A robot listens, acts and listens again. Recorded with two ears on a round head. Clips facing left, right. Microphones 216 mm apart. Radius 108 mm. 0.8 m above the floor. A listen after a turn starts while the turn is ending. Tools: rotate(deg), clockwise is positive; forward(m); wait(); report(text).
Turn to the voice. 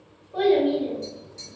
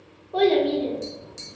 rotate(65)
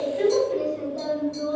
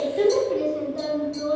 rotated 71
rotate(40)
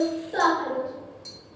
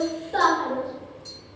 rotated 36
report("Found it: a child speaking, straight ahead.")